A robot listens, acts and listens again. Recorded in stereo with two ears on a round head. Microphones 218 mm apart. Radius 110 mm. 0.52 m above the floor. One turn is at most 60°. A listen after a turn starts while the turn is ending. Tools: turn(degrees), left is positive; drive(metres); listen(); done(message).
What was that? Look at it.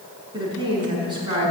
turn(degrees=-20)
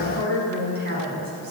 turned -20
turn(degrees=-60)
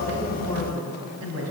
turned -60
turn(degrees=-60)
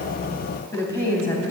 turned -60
turn(degrees=10)
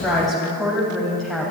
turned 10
done("Facing the woman speaking, 2 to 4 m away.")